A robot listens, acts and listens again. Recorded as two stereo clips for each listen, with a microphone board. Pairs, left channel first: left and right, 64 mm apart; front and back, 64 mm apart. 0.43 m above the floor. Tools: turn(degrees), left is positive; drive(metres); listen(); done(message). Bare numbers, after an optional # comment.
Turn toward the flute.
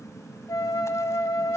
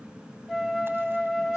# The flute: 90° left.
turn(90)
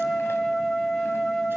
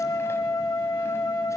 done("Found it: a flute, straight ahead, 1 to 2 m away.")